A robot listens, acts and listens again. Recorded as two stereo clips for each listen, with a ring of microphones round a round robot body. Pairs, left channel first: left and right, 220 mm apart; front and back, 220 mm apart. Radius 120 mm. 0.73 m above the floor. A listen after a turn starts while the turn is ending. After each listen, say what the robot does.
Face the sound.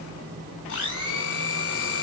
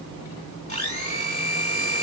Turn 60° left.
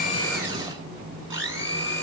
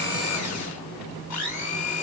Turn 15° right.
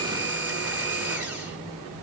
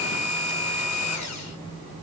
Turn 10° right.
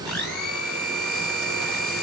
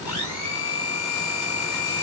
Found it: a blender, straight ahead.